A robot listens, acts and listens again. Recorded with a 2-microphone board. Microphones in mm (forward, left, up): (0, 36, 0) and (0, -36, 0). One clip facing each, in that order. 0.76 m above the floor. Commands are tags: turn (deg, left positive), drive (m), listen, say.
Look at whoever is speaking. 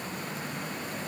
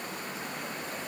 <listen/>
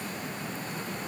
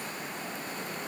<listen/>
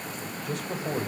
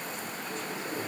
<turn deg="90"/>
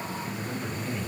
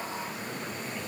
<say>Facing the man speaking, over 4 m away.</say>